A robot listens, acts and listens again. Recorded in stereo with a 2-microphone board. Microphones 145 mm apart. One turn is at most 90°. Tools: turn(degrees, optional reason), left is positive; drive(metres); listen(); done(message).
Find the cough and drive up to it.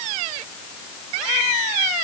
listen()
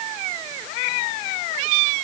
listen()
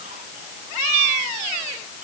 done("I can't make out a cough.")